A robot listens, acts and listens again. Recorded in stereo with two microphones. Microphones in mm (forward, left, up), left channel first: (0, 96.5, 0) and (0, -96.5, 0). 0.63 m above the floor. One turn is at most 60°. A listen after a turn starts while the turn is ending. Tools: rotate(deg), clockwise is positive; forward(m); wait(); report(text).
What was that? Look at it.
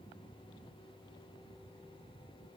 wait()
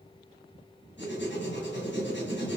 rotate(-60)
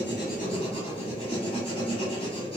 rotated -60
rotate(-35)
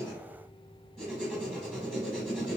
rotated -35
report("Found it: writing, straight ahead.")